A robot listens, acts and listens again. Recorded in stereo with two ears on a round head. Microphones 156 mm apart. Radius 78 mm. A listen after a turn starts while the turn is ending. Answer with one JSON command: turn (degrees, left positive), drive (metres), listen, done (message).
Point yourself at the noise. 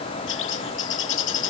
{"turn": 90}
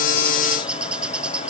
{"done": "Found it: a bird, straight ahead."}